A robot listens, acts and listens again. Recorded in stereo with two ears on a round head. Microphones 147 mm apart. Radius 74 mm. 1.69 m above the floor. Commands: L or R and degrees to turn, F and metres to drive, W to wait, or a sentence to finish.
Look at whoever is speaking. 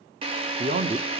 R40
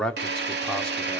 Found it: a man speaking, straight ahead.